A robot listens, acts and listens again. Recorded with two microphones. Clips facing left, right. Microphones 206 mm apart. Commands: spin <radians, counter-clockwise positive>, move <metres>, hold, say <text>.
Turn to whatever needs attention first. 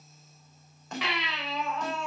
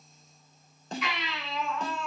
spin 1.57
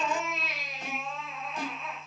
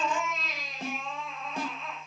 say Found it: a baby crying, straight ahead, 2 to 4 m away.